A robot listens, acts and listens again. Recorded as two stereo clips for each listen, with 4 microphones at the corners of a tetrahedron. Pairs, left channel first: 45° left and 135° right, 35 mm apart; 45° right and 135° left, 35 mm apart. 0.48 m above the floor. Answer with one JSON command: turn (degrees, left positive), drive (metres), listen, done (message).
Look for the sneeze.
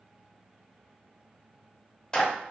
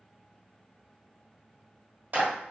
{"listen": true}
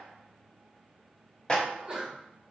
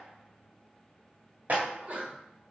{"turn": 170}
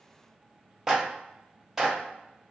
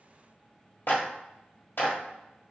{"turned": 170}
{"done": "I heard a sneeze from this way, but can't make it out now."}